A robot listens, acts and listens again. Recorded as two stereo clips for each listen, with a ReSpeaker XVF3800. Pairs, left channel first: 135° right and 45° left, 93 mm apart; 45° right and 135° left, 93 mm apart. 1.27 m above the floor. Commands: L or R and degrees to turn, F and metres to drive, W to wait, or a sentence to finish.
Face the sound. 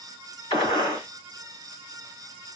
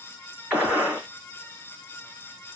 R150
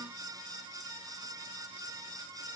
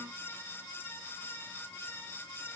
I heard a gunshot from this way, but can't make it out now.